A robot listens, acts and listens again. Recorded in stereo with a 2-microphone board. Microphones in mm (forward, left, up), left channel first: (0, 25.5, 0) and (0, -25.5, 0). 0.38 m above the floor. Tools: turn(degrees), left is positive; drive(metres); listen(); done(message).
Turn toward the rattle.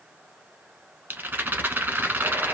turn(degrees=-45)
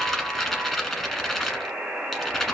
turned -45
done("Facing the rattle.")